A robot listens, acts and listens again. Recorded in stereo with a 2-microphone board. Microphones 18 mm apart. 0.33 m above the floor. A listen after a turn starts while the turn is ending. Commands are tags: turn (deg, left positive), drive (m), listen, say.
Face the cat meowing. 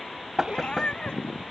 <turn deg="60"/>
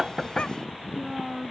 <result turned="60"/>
<listen/>
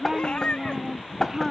<turn deg="60"/>
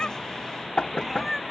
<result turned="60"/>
<say>Found it: a cat meowing, straight ahead.</say>